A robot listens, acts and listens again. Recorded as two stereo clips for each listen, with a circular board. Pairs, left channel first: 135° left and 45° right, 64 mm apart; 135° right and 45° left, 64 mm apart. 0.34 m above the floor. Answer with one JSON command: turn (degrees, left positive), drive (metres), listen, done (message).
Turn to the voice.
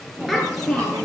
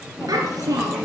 {"turn": 45}
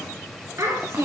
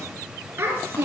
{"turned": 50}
{"done": "Found it: a child speaking, straight ahead."}